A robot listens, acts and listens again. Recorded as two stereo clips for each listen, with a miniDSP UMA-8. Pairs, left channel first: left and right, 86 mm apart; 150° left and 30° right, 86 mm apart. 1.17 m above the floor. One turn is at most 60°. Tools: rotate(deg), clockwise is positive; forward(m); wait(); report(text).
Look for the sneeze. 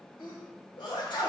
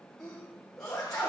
rotate(-60)
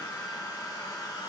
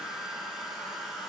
report("Facing where the sneeze came from. I can't hear it now.")